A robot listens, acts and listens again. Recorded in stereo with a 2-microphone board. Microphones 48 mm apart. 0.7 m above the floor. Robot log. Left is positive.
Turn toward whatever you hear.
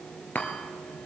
note: The chime: about 35° left or 145° left.
cmd yaw +35
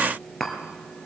end: Facing the chime, 2 to 4 m away.